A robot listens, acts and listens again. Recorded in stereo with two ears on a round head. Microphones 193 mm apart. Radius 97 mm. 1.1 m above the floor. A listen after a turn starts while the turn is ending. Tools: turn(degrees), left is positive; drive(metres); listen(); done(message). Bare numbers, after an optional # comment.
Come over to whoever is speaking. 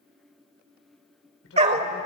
# The man speaking: about 65° left or 115° left.
turn(65)
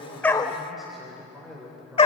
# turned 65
drive(1.0)
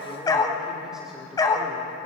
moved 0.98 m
listen()
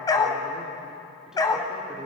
listen()
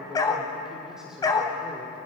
drive(1.0)
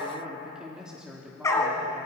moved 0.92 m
drive(1.0)
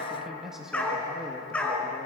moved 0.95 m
drive(1.0)
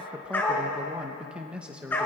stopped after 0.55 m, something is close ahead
done("I am next to the man speaking.")